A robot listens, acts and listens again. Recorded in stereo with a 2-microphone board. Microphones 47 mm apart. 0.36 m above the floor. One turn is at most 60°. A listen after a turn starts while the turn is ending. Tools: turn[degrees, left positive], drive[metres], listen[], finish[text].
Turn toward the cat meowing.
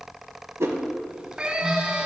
Thought: The cat meowing: about 20° right or 160° right.
Action: turn[-20]
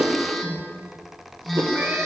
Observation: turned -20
Action: listen[]
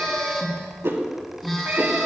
Action: listen[]
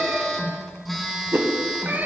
Thought: So it is at 140° right.
Action: turn[-60]
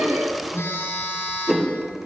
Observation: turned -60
Thought: Nothing new. It was at 80° right.
Action: turn[-60]
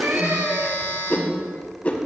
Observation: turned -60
Thought: The cat meowing is now 40° right.
Action: turn[-40]
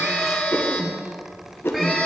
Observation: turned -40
Action: listen[]
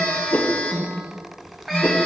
Action: finish[Found it: a cat meowing, straight ahead.]